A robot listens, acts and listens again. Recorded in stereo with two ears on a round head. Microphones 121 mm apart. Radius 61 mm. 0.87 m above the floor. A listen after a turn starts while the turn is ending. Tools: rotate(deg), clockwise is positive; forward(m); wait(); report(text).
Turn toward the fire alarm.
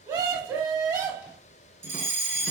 rotate(20)
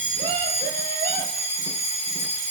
report("Found it: a fire alarm, straight ahead.")